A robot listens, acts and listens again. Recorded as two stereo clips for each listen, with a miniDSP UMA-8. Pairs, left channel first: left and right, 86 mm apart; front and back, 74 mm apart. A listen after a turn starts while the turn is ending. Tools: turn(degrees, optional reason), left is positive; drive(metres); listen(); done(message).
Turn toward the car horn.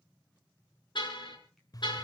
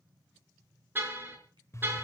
turn(degrees=115, reason="The car horn: 115° left.")
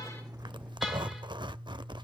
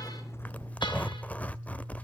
listen()
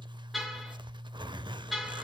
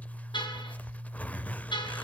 done("Facing the car horn, over 4 m away.")